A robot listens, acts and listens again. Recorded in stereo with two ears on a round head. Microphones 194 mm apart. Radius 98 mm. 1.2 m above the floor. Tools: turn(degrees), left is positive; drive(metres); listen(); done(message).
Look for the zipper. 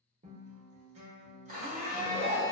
turn(degrees=90)
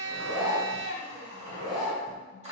done("Found it: a zipper, straight ahead, 1 to 2 m away.")